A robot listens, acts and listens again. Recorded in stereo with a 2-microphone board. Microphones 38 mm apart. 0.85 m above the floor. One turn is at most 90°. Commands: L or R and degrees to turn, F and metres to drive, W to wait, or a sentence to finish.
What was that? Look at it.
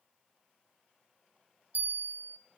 R60
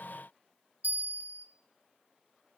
R60
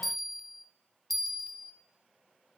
Facing the bell, under 1 m away.